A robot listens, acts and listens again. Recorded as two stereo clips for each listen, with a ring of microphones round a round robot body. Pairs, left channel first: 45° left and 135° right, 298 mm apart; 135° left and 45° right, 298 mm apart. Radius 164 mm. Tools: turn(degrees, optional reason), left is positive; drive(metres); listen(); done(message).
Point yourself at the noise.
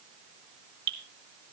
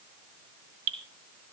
turn(degrees=-80, reason="The dripping: 80° right.")
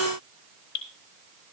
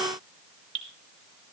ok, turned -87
turn(degrees=10, reason="The dripping is now 10° left.")
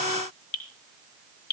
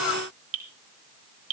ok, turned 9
done("Facing the dripping.")